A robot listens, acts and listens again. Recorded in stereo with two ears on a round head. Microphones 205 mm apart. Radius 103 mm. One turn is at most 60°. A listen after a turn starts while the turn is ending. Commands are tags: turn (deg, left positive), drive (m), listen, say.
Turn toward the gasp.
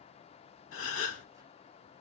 <turn deg="60"/>
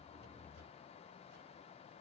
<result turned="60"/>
<listen/>
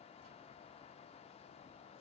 <say>I heard a gasp, but can't make it out now. It was about 5° left or 55° left.</say>